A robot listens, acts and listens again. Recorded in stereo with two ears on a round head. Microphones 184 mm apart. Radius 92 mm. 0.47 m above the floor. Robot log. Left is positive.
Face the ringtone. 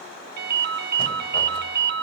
note: The ringtone: about 55° right or 125° right.
cmd yaw -55
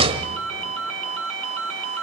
note: So it is at 70° right.
cmd yaw -70
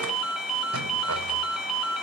end: Found it: a ringtone, straight ahead.